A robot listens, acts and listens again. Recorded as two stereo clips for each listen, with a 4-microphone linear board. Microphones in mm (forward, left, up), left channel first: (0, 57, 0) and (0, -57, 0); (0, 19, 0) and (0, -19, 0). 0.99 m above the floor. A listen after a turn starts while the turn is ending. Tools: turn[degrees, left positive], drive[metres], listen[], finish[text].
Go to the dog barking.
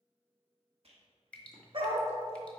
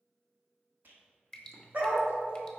Thought: The dog barking: about 50° right or 130° right.
Action: turn[-50]
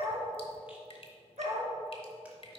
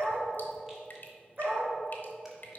Thought: So it is at 80° right.
Action: turn[-80]
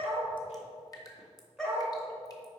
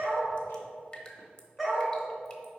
Action: drive[1.0]
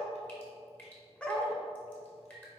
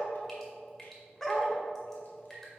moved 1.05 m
Thought: The dog barking is now 10° left.
Action: turn[10]
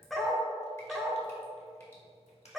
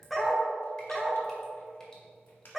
Action: drive[1.0]
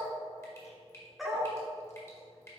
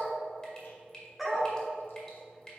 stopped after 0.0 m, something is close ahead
Action: finish[Arrived at the dog barking, straight ahead.]